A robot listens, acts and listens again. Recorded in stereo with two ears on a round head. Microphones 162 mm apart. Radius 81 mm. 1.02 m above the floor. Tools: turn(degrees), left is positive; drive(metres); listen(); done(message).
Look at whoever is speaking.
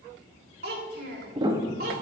turn(degrees=-60)
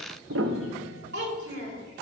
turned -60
turn(degrees=-65)
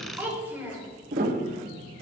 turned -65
turn(degrees=-10)
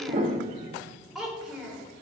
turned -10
done("Facing the child speaking.")